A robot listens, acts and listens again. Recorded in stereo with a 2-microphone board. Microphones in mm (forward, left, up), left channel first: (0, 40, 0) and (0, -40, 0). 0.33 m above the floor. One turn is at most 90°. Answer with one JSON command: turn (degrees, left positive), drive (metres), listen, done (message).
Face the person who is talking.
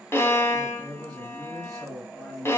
{"turn": 30}
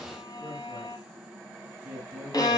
{"turn": -25}
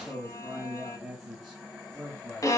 {"done": "Facing the man speaking."}